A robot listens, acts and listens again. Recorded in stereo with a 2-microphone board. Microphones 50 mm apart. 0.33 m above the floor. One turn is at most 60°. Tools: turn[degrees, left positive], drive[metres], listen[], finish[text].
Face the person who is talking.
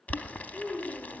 Thought: The child speaking: about 15° right or 165° right.
Action: turn[-15]
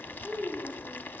Thought: The child speaking: about 30° right or 150° right.
Action: turn[-30]
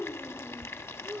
Thought: So it is at 125° right.
Action: turn[-60]
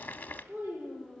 Thought: The child speaking is now 60° right.
Action: turn[-60]
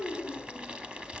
Action: finish[Found it: a child speaking, straight ahead, over 4 m away.]